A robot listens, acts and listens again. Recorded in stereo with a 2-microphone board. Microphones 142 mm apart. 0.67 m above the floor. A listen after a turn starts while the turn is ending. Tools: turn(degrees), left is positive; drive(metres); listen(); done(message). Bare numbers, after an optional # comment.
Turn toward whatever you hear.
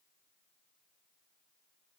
listen()
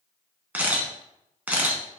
turn(-30)
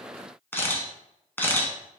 # So it is at 15° left.
turn(15)
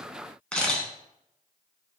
# The camera shutter is now 10° left.
turn(10)
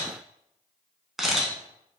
done("Found it: a camera shutter, straight ahead.")